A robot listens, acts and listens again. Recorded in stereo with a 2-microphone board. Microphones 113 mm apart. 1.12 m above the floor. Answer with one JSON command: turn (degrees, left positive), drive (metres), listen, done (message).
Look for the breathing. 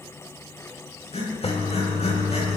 {"turn": 65}
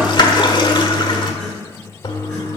{"listen": true}
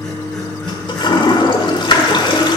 {"listen": true}
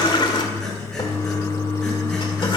{"done": "I heard breathing, but can't make it out now. It was about straight ahead or 50° left."}